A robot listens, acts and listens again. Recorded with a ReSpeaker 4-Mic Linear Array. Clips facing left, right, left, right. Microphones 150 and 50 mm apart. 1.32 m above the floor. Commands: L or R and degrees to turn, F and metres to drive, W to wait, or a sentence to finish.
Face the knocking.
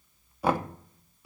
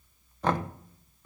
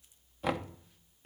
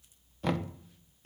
L30
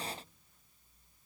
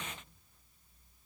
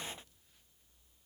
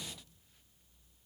W
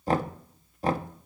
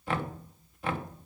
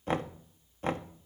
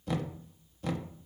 L140
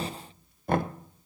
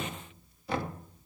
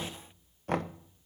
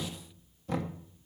L55
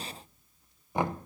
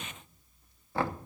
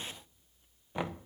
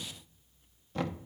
L20
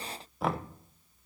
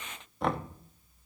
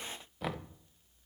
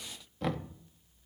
Found it: knocking, straight ahead, under 1 m away.